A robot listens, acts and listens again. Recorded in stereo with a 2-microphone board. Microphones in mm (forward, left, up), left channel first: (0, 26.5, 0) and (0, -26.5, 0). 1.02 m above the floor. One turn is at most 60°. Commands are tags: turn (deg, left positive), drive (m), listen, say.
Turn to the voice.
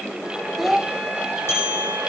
<turn deg="-30"/>
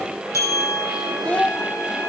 <turn deg="25"/>
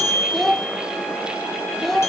<say>Facing the child speaking, under 1 m away.</say>